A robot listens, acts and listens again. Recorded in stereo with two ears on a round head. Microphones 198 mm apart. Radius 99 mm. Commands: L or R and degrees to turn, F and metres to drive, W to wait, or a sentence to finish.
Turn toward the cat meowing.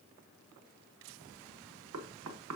W
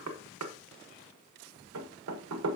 W
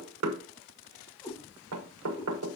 L15
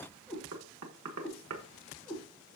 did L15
L30
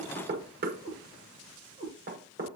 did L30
R20
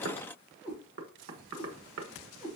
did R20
Found it: a cat meowing, straight ahead, over 4 m away.